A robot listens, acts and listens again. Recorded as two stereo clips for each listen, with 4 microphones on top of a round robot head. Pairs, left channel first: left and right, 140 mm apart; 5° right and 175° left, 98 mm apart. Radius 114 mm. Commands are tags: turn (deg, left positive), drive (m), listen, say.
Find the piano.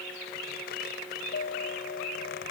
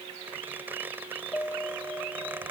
<turn deg="65"/>
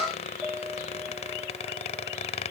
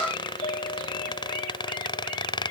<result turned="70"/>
<say>Facing the piano.</say>